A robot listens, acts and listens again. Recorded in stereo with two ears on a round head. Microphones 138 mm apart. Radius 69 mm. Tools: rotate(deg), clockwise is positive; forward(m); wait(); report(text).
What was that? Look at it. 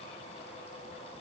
wait()
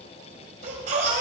rotate(50)
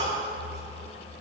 rotate(75)
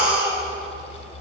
rotate(10)
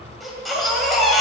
report("Facing the baby crying, 2 to 4 m away.")